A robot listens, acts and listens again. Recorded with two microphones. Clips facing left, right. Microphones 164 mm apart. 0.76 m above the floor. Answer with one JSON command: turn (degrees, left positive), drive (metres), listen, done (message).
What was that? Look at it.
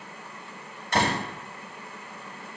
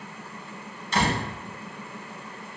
{"turn": 65}
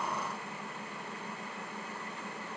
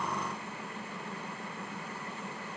{"listen": true}
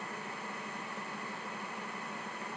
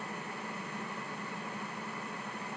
{"done": "I heard a door slam, but can't make it out now. It was about straight ahead or 50° left."}